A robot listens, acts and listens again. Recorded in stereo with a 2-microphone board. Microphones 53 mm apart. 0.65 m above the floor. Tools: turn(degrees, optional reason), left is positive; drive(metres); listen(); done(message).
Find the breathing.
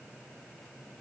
listen()
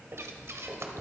turn(degrees=-65, reason="The breathing: about 65° right or 115° right.")
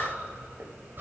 turn(degrees=-45, reason="So it is at 45° right.")
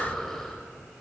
done("Facing the breathing, 1 to 2 m away.")